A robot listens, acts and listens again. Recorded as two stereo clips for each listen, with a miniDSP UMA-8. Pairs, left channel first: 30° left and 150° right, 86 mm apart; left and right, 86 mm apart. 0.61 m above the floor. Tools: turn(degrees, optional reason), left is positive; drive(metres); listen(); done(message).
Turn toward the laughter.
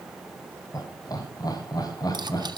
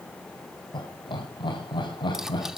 turn(degrees=70, reason="The laughter: 70° left.")
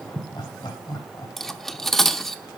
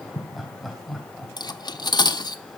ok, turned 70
done("Facing the laughter, 2 to 4 m away.")